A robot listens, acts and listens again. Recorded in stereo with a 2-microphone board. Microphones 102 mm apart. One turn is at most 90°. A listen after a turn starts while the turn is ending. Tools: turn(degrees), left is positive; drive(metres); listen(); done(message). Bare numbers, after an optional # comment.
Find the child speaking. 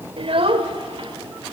# The child speaking: about 60° right or 120° right.
turn(-60)
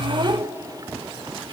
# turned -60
# So it is at 35° right.
turn(-35)
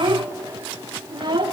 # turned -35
# The child speaking is now 50° right.
turn(-50)
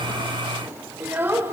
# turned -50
# The child speaking is now 25° right.
turn(-25)
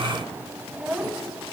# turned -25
# The child speaking is now 10° right.
turn(-10)
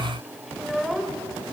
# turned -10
done("Facing the child speaking, 1 to 2 m away.")